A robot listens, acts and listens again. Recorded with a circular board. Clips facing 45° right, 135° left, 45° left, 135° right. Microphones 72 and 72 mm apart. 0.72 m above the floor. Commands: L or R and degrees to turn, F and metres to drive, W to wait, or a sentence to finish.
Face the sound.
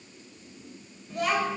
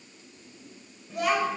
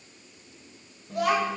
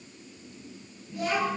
L50
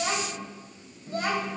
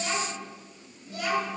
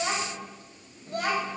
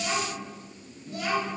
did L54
Facing the child speaking, 2 to 4 m away.